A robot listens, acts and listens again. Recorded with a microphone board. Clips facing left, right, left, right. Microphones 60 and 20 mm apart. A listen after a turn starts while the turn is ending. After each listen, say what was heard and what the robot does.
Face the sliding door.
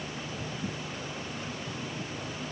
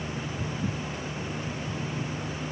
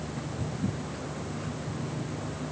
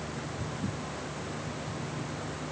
Keep listening.
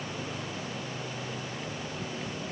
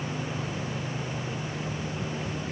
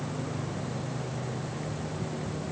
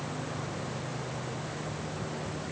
Keep listening.
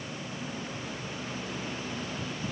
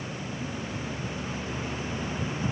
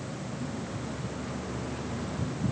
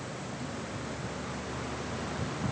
I can't make out a sliding door.